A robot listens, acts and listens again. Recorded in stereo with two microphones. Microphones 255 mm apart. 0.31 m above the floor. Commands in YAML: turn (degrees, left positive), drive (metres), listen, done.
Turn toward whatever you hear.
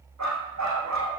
turn: -90
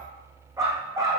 turn: -10
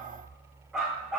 done: "Facing the dog barking, over 4 m away."